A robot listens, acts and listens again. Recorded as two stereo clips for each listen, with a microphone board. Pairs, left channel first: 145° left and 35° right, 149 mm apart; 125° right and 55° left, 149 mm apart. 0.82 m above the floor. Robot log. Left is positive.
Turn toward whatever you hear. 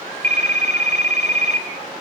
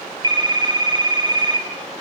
end: Facing the phone ringing, 2 to 4 m away.